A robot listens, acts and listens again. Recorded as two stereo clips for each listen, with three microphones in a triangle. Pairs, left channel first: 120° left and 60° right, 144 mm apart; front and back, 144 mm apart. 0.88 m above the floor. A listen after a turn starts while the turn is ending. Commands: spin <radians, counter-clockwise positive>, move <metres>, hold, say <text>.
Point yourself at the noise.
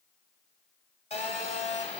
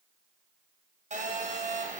spin 2.71
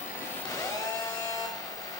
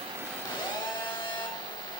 spin 0.96
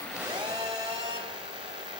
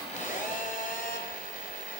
spin -0.17
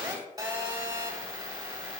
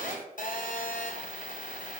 say Facing the phone buzzing, 1 to 2 m away.